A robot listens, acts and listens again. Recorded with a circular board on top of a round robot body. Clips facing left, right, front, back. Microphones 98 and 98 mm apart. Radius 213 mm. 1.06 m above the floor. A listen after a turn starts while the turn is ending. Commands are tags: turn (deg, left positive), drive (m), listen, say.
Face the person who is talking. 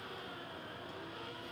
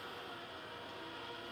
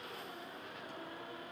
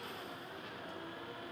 <listen/>
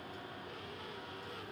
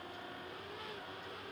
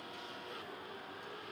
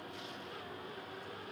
<listen/>
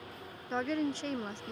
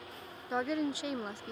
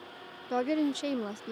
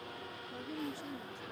<turn deg="-10"/>
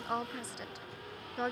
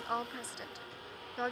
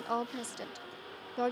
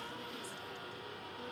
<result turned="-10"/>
<say>Found it: a woman speaking, straight ahead.</say>